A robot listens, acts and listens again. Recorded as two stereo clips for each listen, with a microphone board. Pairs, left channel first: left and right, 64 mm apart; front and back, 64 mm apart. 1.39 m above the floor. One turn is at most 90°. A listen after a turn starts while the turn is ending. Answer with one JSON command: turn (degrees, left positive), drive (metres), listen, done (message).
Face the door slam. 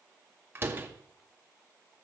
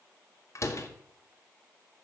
{"turn": -35}
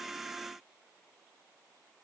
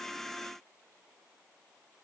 {"done": "Facing where the door slam came from. I can't hear it now."}